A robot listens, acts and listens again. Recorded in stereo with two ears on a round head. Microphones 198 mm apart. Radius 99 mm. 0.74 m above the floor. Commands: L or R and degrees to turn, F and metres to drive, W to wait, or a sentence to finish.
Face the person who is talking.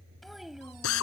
R30
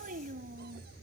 R135
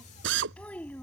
L10
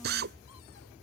W
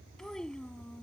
Facing the child speaking.